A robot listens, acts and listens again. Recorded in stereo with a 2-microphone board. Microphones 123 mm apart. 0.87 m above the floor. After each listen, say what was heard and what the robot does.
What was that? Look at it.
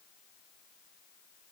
Keep listening.
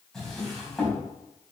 Turn 30° left.
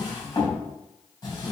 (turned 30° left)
So it is at 145° left. Turn 145° left.
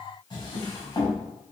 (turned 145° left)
The drawer is now 40° left. Turn 40° left.
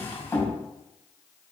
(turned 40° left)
The drawer is now 20° left. Turn 20° left.
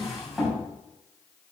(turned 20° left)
Found it: a drawer, straight ahead, 2 to 4 m away.